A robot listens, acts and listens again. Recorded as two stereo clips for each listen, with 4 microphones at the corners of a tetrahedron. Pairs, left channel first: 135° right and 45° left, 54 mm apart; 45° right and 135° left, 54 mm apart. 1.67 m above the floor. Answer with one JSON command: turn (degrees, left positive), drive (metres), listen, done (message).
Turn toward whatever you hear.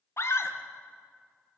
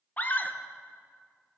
{"turn": -105}
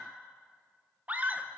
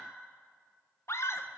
{"turn": -15}
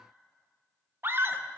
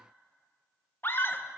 {"done": "Found it: a scream, straight ahead, 1 to 2 m away."}